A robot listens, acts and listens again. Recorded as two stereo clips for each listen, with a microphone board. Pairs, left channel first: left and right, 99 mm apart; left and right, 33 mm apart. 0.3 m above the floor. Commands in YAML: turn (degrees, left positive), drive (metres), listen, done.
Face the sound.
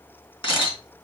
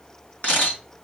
turn: 60
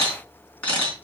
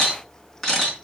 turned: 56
turn: 15
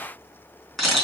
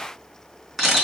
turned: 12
done: "Found it: a camera shutter, straight ahead."